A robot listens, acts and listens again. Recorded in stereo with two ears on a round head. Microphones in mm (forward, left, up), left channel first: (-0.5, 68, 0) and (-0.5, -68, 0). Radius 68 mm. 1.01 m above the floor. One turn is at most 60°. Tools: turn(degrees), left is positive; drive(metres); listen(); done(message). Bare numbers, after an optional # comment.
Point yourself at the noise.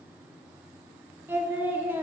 # The singing: about 15° right or 165° right.
turn(-15)
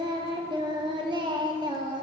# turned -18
# So it is at 145° right.
turn(-60)
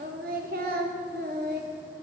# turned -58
# The singing is now 85° right.
turn(-60)
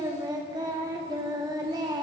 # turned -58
# The singing is now 30° right.
turn(-30)
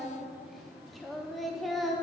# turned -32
done("Found it: singing, straight ahead.")